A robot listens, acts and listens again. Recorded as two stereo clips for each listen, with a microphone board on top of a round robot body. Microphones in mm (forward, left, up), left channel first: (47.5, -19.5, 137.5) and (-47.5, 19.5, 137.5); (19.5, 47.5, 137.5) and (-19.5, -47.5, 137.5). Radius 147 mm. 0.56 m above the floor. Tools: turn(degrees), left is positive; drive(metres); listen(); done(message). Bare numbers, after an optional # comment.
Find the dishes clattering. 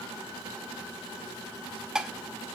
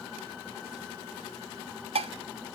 # The dishes clattering: 120° right.
turn(-120)
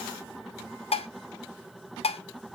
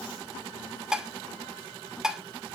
# The dishes clattering is now 30° right.
turn(-30)
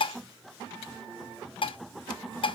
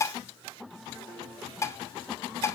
# The dishes clattering is now 10° left.
turn(10)
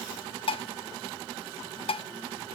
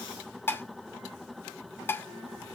done("Facing the dishes clattering, under 1 m away.")